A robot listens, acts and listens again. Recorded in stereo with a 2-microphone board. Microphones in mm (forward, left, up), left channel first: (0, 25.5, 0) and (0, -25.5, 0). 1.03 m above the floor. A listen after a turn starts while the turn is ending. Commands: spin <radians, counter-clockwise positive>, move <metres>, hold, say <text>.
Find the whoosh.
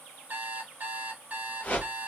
spin 0.61
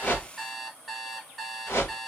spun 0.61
spin 1.92
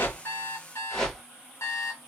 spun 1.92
spin 0.17
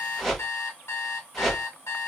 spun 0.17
say Found it: a whoosh, straight ahead, 2 to 4 m away.